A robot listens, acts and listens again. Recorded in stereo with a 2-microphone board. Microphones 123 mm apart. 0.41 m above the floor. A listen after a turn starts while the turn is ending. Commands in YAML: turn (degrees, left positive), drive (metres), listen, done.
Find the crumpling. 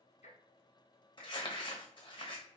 turn: 40
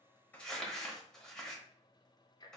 done: "Found it: crumpling, straight ahead, under 1 m away."